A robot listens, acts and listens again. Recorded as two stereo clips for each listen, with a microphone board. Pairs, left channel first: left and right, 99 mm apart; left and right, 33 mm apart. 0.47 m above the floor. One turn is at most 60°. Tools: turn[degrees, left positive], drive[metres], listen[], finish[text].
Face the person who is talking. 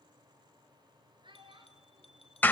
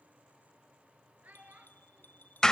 Thought: The child speaking: about 50° right or 130° right.
Action: turn[-50]
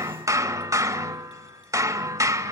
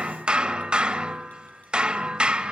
Action: listen[]
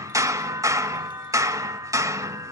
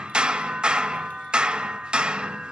Action: listen[]
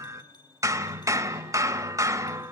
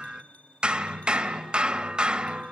Action: finish[I heard a child speaking, but can't make it out now. It was about straight ahead or 80° right.]